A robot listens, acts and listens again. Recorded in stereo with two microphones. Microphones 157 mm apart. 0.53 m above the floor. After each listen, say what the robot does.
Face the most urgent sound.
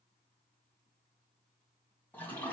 Keep listening.
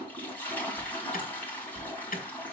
Turn 65° left.
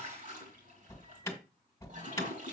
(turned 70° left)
Turn 20° left.
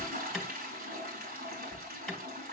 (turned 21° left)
Found it: an alarm, straight ahead.